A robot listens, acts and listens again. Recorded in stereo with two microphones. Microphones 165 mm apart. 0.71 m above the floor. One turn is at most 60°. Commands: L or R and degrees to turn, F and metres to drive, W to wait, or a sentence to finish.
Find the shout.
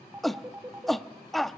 L30
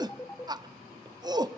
R30
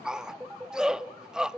Facing the shout.